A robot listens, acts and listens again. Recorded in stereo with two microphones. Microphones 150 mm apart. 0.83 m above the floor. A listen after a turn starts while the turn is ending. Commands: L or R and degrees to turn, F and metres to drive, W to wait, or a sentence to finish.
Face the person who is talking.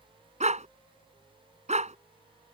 W
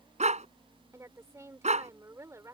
R20
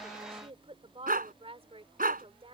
R140
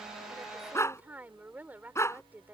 R10
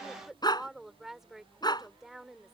Facing the woman speaking.